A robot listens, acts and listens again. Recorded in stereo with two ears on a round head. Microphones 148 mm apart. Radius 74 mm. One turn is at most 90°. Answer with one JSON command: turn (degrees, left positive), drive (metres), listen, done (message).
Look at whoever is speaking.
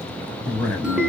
{"turn": 30}
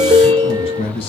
{"turn": 90}
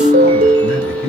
{"turn": 90}
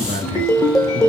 {"turn": -25}
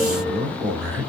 {"turn": -10}
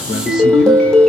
{"listen": true}
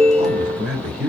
{"done": "Facing the man speaking."}